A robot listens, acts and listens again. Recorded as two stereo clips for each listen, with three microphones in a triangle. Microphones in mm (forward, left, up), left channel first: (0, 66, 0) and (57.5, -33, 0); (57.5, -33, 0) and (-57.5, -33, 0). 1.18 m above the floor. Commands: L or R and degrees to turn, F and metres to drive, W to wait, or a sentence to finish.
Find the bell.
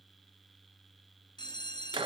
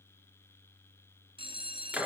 L160
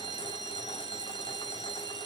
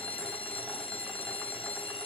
R15
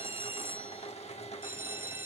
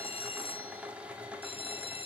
Facing the bell, under 1 m away.